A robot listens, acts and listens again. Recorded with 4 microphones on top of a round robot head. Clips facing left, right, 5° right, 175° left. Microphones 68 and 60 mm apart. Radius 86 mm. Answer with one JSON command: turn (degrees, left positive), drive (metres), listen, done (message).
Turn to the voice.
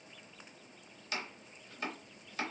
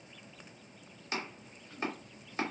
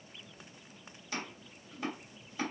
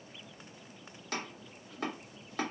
{"listen": true}
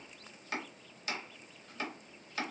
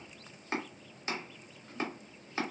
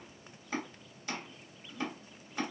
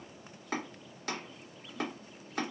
{"listen": true}
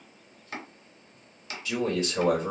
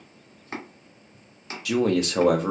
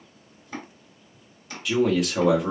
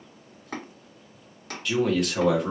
{"turn": -95}
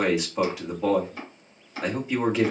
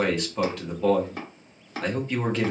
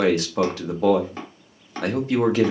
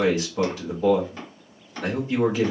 {"turn": 10}
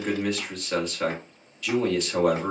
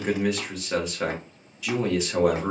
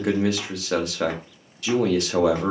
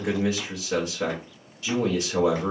{"done": "Found it: a man speaking, straight ahead, 1 to 2 m away."}